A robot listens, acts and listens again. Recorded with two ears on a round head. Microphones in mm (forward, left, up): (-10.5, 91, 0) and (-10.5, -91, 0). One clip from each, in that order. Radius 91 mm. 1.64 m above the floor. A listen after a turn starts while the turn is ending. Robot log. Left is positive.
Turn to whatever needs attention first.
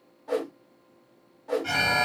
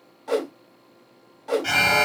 note: The alarm: about 35° right or 145° right.
cmd yaw -35
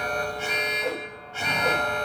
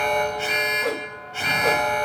note: So it is at 10° right.
cmd yaw -10
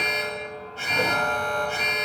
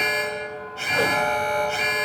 end: Found it: an alarm, straight ahead, under 1 m away.